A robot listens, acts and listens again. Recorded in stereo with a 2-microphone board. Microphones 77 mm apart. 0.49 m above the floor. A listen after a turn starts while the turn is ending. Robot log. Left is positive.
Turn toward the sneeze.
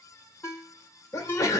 note: The sneeze: about 45° left or 135° left.
cmd yaw +45
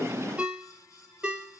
cmd idle
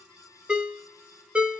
end: I heard a sneeze, but can't make it out now. It was about straight ahead or 90° left.